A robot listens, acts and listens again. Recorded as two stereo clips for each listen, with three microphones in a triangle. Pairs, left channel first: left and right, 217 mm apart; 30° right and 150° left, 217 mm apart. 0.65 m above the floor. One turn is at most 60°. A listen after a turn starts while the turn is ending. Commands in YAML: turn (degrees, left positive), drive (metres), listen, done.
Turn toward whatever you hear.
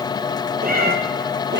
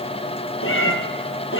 turn: -55
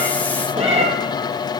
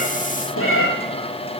turn: -30
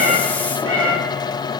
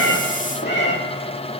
done: "Found it: a cat meowing, straight ahead."